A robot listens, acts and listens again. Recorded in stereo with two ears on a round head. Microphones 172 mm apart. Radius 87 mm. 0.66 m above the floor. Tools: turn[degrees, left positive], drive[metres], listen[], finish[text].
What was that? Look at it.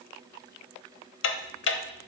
Thought: The ticking: about 70° left or 110° left.
Action: turn[70]
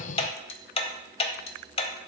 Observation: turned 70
Thought: So it is at 30° left.
Action: turn[30]
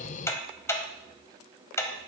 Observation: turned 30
Thought: The ticking is now 15° left.
Action: turn[15]
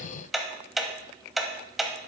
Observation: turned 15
Action: finish[Facing the ticking.]